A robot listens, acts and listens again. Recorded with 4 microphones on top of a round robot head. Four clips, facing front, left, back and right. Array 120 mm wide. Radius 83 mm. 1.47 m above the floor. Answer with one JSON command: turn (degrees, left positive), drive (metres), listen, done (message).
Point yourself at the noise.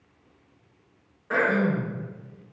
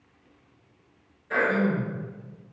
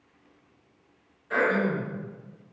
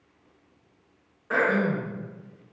{"turn": -40}
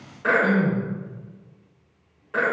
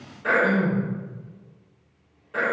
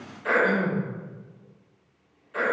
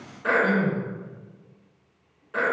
{"done": "Found it: throat clearing, straight ahead."}